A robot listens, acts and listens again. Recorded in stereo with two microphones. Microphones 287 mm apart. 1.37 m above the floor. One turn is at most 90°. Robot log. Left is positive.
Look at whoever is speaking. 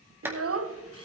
note: The child speaking: about 55° right or 125° right.
cmd yaw -55
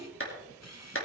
cmd idle
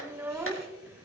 note: So it is at 10° right.
cmd yaw -10
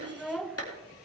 end: Found it: a child speaking, straight ahead, under 1 m away.